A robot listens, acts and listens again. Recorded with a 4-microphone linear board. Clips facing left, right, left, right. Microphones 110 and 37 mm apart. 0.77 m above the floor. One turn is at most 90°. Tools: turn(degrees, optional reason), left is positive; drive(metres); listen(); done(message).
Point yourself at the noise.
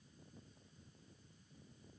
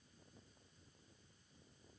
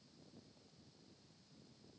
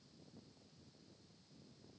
listen()
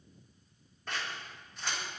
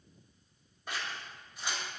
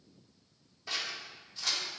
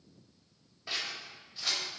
turn(degrees=-30)
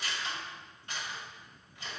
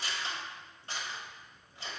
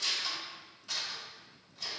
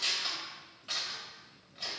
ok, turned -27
turn(degrees=-90, reason="So it is at 140° right.")
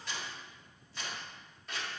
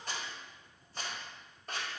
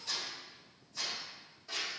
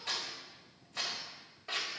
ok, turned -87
turn(degrees=-50, reason="The scissors is now 50° right.")
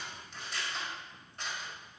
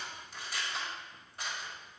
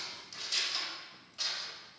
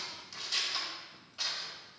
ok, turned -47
done("Facing the scissors, 1 to 2 m away.")